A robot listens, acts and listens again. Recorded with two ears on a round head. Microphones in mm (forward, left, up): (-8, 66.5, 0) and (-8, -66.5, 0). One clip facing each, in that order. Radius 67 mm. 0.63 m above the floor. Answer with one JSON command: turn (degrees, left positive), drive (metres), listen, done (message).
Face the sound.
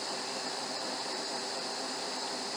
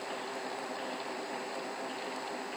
{"listen": true}
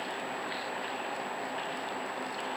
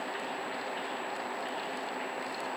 {"listen": true}
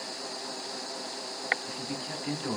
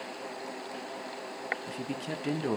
{"turn": -40}
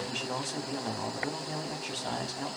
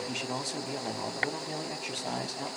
{"turn": -10}
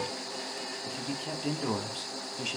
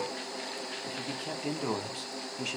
{"done": "Found it: a man speaking, straight ahead."}